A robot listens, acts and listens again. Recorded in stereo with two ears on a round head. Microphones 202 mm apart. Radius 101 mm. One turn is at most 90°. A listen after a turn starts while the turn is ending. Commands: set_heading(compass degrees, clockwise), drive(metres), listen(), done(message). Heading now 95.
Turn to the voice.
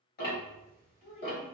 set_heading(65)
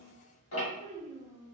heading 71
set_heading(61)
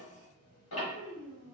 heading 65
done("Facing the child speaking, 1 to 2 m away.")